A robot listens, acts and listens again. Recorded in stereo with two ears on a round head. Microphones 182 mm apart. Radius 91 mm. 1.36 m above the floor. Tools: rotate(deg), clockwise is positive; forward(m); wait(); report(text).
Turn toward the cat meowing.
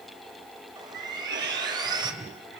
rotate(55)
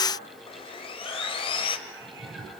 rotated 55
wait()
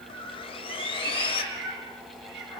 rotate(55)
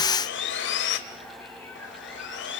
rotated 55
wait()
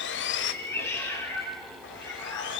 rotate(-15)
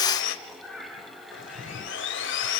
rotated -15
report("Facing the cat meowing, over 4 m away.")